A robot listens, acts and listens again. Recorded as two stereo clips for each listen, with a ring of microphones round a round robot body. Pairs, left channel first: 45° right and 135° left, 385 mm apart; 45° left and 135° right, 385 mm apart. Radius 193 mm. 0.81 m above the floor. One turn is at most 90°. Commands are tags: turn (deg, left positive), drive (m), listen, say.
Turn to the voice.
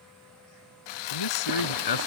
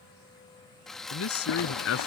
<turn deg="-10"/>
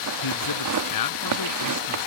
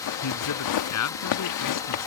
<say>Facing the man speaking.</say>